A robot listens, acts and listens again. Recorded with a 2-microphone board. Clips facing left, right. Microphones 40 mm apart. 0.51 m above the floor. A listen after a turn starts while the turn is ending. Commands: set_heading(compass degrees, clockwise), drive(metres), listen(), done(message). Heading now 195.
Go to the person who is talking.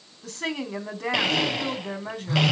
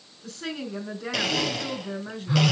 set_heading(135)
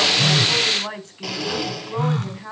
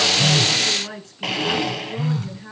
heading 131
set_heading(76)
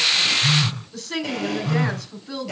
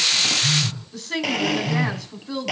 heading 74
drive(1.0)
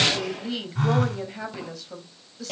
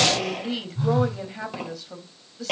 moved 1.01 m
drive(1.0)
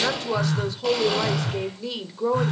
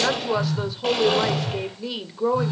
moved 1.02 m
set_heading(84)
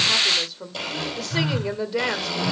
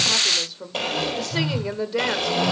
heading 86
drive(1.0)
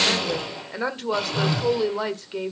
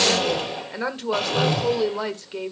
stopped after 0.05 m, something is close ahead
done("Arrived at the woman speaking, straight ahead.")